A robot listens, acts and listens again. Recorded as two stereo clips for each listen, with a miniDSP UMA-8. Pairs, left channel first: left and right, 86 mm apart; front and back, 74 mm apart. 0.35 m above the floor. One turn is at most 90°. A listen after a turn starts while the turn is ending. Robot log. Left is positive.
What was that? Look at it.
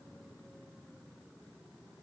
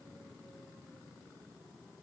cmd idle
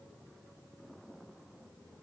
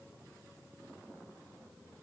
cmd idle
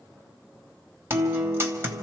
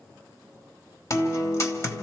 note: The guitar: 35° right.
cmd yaw -35
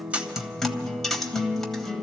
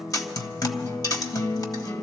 end: Found it: a guitar, straight ahead.